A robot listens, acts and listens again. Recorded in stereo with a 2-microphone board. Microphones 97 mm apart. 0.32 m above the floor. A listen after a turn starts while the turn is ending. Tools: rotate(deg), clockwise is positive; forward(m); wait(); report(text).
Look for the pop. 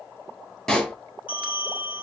rotate(-30)
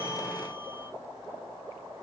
wait()
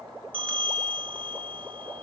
report("I heard a pop, but can't make it out now. It was about 25° right or 145° left.")